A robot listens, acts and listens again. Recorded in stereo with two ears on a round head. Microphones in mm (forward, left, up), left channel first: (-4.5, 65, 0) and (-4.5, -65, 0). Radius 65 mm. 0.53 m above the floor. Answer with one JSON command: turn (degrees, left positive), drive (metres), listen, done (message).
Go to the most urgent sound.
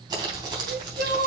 {"turn": -65}
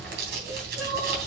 {"turn": -30}
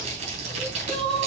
{"drive": 1.0}
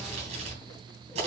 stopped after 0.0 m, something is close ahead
{"listen": true}
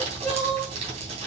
{"done": "Something is in my way. I am facing the crying but have not reached it."}